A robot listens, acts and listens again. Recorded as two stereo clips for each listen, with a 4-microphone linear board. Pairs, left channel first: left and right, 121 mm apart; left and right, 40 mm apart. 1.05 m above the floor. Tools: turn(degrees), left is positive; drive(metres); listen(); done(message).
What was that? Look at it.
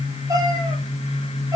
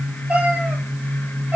turn(degrees=-30)
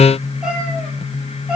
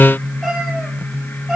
done("Found it: a cat meowing, straight ahead.")